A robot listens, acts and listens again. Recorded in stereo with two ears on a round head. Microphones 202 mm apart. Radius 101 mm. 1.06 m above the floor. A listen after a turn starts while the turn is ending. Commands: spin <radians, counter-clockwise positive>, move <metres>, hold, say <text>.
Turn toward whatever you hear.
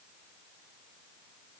hold
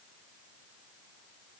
hold
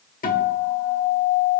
spin 0.70
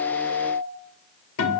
spin 1.66
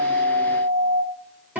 spin -0.17
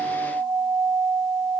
say Facing the guitar, 1 to 2 m away.